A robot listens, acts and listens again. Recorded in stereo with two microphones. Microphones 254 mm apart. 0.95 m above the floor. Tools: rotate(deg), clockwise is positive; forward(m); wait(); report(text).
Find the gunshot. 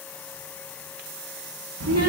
wait()
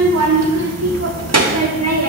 wait()
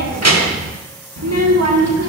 report("I can't make out a gunshot to turn to.")